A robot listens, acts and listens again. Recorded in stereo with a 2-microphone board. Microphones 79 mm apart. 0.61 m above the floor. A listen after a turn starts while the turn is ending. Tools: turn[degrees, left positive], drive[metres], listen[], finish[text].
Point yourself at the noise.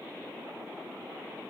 Action: listen[]
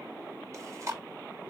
Thought: The chewing: about 40° right or 140° right.
Action: turn[-40]
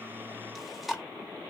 Action: finish[Found it: chewing, straight ahead, under 1 m away.]